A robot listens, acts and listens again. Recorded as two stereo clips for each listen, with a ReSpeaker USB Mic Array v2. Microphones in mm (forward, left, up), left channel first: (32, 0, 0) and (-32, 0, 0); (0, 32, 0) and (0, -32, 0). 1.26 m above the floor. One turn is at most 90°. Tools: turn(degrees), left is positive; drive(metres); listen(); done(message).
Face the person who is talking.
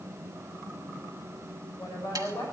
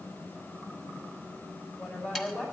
turn(degrees=10)
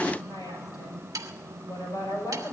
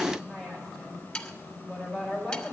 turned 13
done("Found it: a woman speaking, straight ahead.")